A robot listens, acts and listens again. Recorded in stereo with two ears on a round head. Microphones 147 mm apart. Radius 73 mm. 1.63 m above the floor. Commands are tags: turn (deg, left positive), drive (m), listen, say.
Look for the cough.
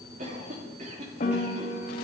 <turn deg="-50"/>
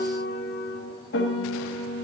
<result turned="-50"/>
<listen/>
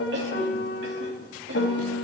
<turn deg="-85"/>
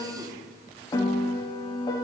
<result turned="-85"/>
<listen/>
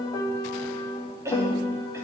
<turn deg="-20"/>
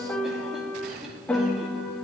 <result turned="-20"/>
<listen/>
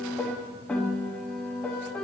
<listen/>
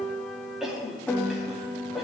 <say>Facing the cough, 2 to 4 m away.</say>